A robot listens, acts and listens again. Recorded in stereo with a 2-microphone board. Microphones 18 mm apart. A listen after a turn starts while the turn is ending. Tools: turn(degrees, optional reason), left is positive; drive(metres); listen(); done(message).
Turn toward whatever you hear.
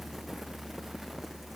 listen()
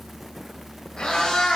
turn(degrees=65, reason="The cat meowing: about 65° left or 115° left.")
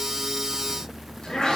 turn(degrees=50, reason="So it is at 50° left.")
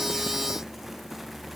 listen()
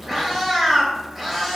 done("Facing the cat meowing, 2 to 4 m away.")